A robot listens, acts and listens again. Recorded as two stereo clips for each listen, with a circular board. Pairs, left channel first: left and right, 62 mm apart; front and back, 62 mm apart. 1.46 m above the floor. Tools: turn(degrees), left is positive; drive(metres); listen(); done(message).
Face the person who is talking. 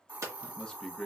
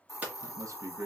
turn(degrees=165)
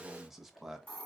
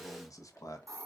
done("Found it: a man speaking, straight ahead, under 1 m away.")